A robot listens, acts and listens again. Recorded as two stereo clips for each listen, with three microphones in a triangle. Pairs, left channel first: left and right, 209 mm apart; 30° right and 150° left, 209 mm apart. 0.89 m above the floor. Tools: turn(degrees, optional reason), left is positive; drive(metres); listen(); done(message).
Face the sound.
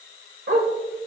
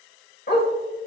turn(degrees=-70, reason="The dog barking: 70° right.")
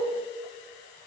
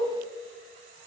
listen()
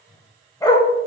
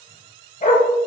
turn(degrees=20, reason="The dog barking is now 20° left.")
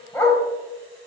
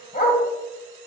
turn(degrees=15, reason="The dog barking is now 15° left.")
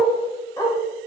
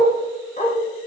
turn(degrees=20, reason="The dog barking is now 20° left.")
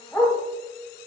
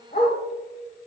turn(degrees=10, reason="The dog barking is now 10° left.")
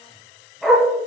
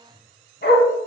done("Facing the dog barking.")